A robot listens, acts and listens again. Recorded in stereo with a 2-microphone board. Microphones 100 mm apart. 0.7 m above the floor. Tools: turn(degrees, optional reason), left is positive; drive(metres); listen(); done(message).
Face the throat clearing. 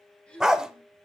turn(degrees=30)
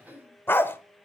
turn(degrees=-20, reason="So it is at 20° right.")
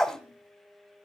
listen()
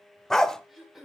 done("Found it: throat clearing, straight ahead, 2 to 4 m away.")